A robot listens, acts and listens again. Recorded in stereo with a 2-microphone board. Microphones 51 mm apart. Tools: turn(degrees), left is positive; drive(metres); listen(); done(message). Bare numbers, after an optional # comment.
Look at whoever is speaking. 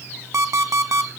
listen()
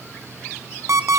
listen()
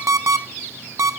done("I can't make out anyone speaking to turn to.")